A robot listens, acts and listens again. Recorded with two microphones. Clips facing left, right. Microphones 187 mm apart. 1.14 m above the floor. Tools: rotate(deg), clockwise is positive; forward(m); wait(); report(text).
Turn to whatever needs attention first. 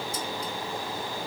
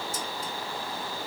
wait()
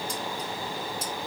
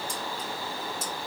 wait()
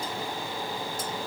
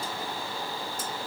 report("I can't make out anything urgent to turn to.")